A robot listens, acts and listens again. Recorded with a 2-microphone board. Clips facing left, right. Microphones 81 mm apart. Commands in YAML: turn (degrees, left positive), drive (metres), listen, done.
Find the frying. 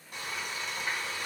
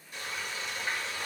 turn: 50
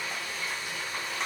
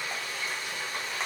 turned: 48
done: "Facing the frying, 1 to 2 m away."